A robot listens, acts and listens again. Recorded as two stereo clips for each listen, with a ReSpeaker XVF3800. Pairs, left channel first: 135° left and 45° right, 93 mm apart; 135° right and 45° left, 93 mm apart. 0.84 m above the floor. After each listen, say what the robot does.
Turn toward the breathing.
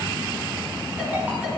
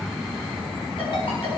Keep listening.
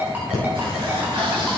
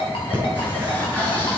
Turn 65° right.
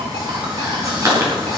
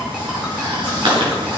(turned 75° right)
Turn 10° left.
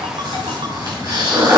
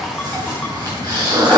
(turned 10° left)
Facing the breathing.